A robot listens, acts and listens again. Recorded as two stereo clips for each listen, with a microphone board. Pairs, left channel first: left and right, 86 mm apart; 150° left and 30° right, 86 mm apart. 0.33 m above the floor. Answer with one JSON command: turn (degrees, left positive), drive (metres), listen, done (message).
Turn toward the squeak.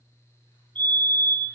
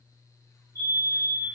{"listen": true}
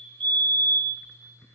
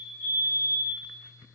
{"listen": true}
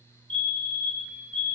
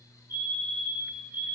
{"done": "I can't make out a squeak to turn to."}